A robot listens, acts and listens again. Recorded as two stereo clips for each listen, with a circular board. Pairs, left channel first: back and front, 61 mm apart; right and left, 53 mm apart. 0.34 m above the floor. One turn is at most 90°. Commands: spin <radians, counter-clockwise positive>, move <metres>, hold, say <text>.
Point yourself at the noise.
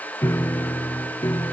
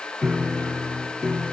spin 1.57
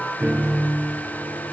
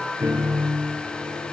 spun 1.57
spin 1.13
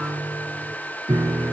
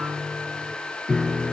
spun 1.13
say Found it: a piano, straight ahead, 1 to 2 m away.